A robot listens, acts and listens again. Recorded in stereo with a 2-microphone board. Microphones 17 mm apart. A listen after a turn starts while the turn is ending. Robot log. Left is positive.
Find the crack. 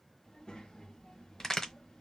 note: The crack: about 30° left or 150° left.
cmd yaw +30
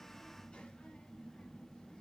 cmd idle
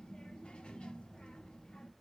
end: I heard a crack, but can't make it out now. It was about straight ahead or 120° left.